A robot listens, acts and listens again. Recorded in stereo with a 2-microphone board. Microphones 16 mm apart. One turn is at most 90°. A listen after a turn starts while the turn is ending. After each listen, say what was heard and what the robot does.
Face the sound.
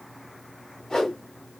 The whoosh: about 45° left or 135° left. Turn 45° left.
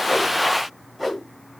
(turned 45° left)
Facing the whoosh, 1 to 2 m away.